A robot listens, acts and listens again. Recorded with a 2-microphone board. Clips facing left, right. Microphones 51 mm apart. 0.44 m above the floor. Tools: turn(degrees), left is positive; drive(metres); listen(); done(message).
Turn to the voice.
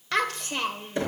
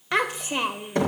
turn(degrees=-20)
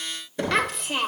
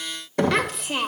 done("Found it: a child speaking, straight ahead.")